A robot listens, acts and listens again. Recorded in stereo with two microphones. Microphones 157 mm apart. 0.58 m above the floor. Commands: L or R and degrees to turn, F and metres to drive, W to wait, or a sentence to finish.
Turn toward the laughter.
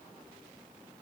W
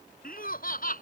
L65
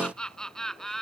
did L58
Found it: laughter, straight ahead.